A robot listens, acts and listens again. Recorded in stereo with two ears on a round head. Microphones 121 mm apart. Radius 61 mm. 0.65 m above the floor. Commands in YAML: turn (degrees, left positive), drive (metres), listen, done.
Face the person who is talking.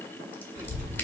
turn: -25
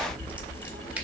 turn: -125
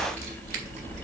turn: -55
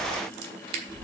done: "Found it: a child speaking, straight ahead."